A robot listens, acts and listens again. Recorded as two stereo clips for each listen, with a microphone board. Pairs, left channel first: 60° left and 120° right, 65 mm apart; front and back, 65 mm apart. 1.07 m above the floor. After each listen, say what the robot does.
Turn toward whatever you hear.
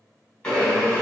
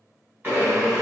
Turn 135° left.
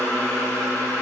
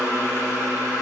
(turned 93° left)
Turn 40° left.
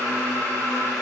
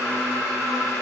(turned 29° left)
Turn 10° left.
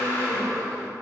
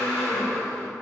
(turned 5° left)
Facing the blender.